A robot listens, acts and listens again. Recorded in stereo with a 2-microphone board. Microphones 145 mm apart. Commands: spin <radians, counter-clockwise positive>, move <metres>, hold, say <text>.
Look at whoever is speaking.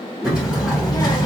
spin 0.44
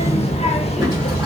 spin 2.18
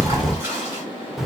say Facing the child speaking, under 1 m away.